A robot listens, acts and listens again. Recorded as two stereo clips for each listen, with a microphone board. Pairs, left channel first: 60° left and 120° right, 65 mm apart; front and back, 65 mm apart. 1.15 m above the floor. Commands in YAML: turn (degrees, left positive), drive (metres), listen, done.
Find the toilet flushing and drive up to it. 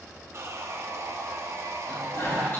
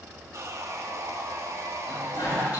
drive: 1.0
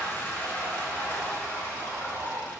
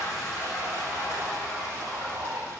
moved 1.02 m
drive: 1.0
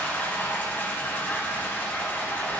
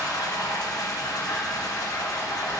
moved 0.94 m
drive: 1.0
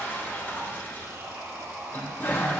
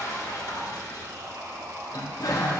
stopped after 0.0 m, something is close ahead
done: "Arrived at the toilet flushing, straight ahead."